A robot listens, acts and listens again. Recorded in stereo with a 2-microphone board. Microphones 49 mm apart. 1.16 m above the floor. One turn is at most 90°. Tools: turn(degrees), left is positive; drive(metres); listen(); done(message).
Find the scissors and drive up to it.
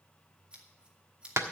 turn(degrees=-20)
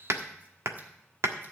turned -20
listen()
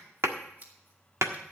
turn(degrees=-90)
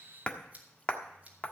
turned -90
turn(degrees=-30)
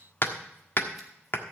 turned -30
listen()
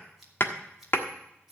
turn(degrees=-10)
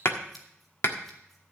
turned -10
listen()
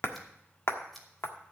drive(metres=1.0)
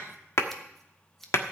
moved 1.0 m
drive(metres=1.0)
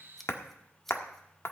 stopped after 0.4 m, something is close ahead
done("I am next to the scissors.")